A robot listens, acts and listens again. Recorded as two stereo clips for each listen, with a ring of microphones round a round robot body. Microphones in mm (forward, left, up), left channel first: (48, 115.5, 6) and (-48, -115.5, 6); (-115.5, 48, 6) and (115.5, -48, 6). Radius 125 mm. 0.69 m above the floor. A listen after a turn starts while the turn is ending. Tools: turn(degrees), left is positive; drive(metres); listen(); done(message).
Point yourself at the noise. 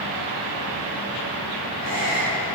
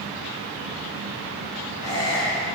turn(degrees=-125)
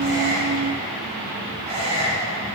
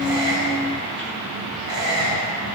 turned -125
turn(degrees=-45)
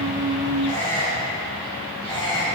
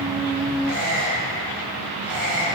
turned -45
turn(degrees=-15)
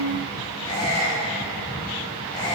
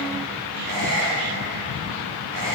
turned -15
done("Found it: a squeak, straight ahead.")